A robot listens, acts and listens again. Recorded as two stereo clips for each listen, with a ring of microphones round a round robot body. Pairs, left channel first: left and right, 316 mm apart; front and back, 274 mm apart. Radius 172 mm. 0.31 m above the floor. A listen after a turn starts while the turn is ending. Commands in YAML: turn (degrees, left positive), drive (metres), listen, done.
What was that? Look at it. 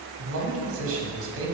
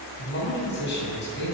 turn: -50
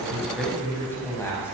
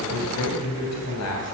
done: "Facing the man speaking, 2 to 4 m away."